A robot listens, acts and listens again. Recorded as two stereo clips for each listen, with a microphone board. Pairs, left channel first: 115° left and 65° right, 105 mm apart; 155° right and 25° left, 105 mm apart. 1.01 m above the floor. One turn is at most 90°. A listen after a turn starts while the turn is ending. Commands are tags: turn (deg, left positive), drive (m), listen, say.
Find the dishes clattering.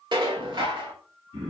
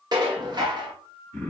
<turn deg="-25"/>
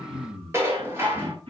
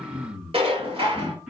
<say>Facing the dishes clattering, 1 to 2 m away.</say>